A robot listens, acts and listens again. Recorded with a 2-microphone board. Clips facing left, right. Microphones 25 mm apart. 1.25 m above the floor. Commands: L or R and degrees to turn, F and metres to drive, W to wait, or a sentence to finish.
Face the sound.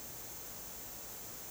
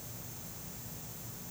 W
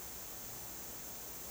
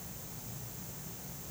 W
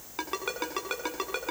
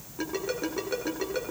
L90
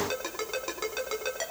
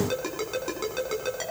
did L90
Found it: a ringtone, straight ahead.